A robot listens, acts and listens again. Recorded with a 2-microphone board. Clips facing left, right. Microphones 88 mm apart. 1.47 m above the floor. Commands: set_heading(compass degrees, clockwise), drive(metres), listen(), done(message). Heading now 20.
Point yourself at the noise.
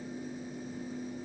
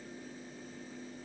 listen()
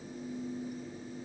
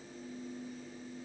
listen()
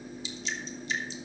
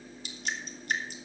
set_heading(80)
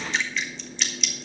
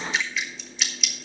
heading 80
done("Found it: dripping, straight ahead.")